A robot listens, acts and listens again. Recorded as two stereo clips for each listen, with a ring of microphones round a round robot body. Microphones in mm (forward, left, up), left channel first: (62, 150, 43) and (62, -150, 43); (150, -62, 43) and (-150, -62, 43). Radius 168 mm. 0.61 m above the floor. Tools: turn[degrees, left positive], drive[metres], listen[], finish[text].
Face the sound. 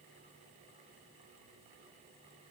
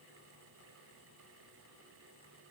Action: listen[]
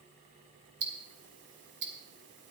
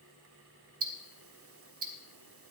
Thought: The ticking: 140° right.
Action: turn[-140]
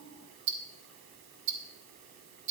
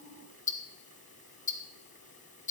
Thought: The ticking is now 65° right.
Action: turn[-65]
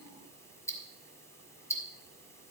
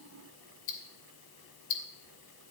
Thought: The ticking is now 10° left.
Action: turn[10]
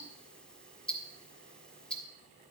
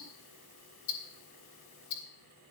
Action: finish[Found it: ticking, straight ahead.]